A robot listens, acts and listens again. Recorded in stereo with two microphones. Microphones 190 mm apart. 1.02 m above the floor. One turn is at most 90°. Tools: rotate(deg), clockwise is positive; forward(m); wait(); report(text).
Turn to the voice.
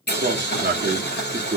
rotate(90)
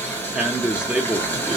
report("Facing the man speaking, under 1 m away.")